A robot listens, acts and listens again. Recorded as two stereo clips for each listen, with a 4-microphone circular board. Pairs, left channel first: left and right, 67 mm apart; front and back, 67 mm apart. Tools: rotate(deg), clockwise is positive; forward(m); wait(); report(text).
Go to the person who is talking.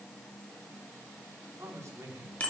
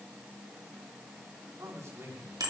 rotate(130)
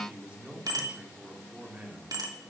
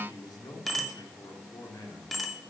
rotate(20)
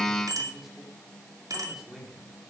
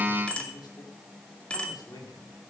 forward(1.0)
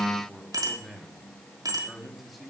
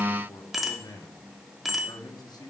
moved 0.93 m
forward(1.0)
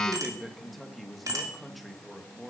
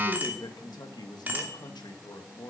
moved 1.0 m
forward(1.0)
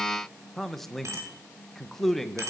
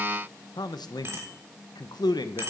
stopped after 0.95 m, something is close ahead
report("I am next to the man speaking.")